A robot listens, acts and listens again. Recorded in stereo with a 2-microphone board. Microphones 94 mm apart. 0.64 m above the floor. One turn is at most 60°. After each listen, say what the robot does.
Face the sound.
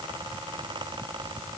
Keep listening.
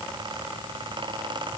Keep listening.
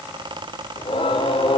Turn 60° left.
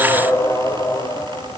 Turn 40° left.
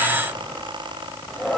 Facing the singing.